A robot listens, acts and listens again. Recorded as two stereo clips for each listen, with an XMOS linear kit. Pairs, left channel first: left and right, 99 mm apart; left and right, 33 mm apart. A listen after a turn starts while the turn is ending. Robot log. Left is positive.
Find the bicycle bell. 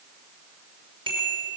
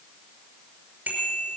note: The bicycle bell: about 60° right or 120° right.
cmd yaw -60
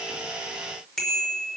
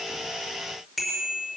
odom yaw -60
end: Found it: a bicycle bell, straight ahead.